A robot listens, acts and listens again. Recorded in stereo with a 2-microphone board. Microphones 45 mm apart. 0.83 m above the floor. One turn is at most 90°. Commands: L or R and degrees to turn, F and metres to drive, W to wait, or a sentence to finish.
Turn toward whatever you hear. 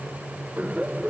R30
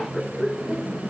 Found it: laughter, straight ahead.